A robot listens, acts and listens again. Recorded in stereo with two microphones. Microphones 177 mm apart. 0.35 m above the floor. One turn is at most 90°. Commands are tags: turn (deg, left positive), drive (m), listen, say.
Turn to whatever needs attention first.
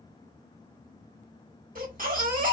<turn deg="-50"/>
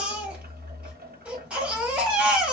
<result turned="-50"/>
<turn deg="-10"/>
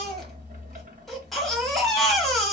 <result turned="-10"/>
<say>Facing the baby crying.</say>